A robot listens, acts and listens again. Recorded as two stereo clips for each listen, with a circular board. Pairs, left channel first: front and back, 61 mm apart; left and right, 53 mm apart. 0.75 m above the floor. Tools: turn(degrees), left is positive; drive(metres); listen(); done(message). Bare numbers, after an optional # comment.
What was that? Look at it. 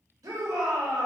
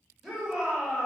# The shout: 170° right.
turn(-170)
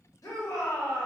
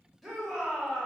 done("Found it: a shout, straight ahead.")